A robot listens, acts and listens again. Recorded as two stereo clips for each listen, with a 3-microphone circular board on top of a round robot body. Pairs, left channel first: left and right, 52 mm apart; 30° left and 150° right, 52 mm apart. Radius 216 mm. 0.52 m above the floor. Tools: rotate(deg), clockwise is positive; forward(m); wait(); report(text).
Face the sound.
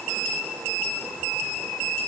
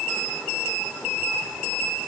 wait()
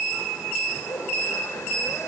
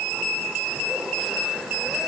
wait()
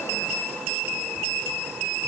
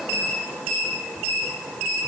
report("I can't make out anything to turn to.")